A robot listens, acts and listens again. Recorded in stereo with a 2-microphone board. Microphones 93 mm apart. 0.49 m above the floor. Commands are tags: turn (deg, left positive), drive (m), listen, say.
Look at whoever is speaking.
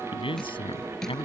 <turn deg="75"/>
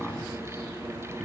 <listen/>
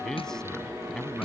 <say>Found it: a man speaking, straight ahead.</say>